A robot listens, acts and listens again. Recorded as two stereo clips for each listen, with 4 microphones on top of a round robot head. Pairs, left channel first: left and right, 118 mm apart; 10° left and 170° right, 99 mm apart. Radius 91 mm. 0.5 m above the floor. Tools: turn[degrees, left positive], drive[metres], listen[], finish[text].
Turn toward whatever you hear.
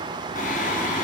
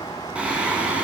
Thought: The singing: 110° left.
Action: turn[110]
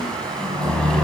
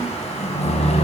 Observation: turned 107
Action: finish[Facing the singing.]